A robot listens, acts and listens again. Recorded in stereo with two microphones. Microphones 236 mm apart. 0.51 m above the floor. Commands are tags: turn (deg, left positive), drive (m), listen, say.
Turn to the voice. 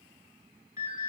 <listen/>
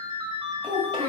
<turn deg="-25"/>
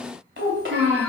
<turn deg="-125"/>
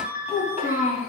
<turn deg="30"/>
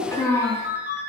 <turn deg="15"/>
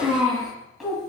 <say>Found it: a child speaking, straight ahead, 2 to 4 m away.</say>